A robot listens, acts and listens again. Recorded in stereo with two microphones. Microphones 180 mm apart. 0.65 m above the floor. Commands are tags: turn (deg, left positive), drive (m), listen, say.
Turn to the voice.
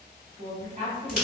<turn deg="-50"/>
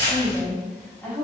<turn deg="15"/>
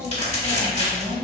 <turn deg="25"/>
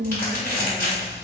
<turn deg="10"/>
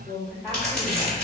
<turn deg="15"/>
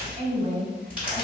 <turn deg="10"/>
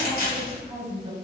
<say>Facing the woman speaking, 1 to 2 m away.</say>